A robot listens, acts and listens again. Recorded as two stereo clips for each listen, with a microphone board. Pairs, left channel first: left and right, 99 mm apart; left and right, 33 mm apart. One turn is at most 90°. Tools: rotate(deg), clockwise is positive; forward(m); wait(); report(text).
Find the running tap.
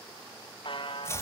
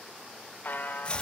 wait()
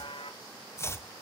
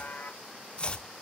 wait()
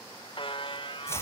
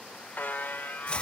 report("I can't make out a running tap to turn to.")